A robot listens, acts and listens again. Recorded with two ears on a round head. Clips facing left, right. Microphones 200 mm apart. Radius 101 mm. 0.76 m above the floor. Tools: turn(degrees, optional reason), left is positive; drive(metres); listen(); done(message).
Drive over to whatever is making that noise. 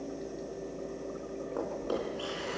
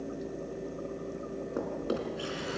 turn(degrees=-25, reason="The drawer: about 25° right or 155° right.")
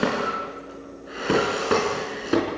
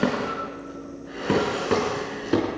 drive(metres=1.0)
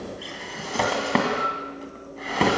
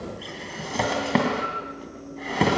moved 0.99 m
drive(metres=1.0)
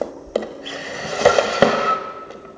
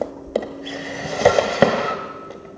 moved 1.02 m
drive(metres=1.0)
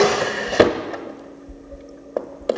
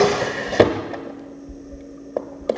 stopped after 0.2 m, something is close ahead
done("I am next to the drawer.")